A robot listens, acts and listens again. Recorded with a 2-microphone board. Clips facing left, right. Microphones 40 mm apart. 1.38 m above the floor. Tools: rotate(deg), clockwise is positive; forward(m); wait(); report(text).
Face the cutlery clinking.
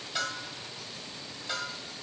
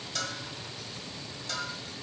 wait()
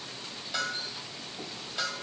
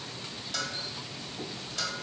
wait()
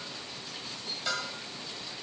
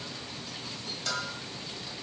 report("I can't make out cutlery clinking, only a bell.")